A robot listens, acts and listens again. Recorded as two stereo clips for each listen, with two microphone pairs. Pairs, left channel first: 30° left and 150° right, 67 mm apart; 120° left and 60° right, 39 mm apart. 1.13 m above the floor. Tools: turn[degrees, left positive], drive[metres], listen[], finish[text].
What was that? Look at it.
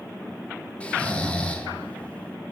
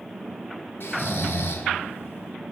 Thought: The snoring: 110° left.
Action: turn[110]
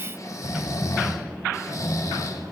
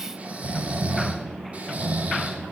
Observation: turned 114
Action: finish[Found it: snoring, straight ahead.]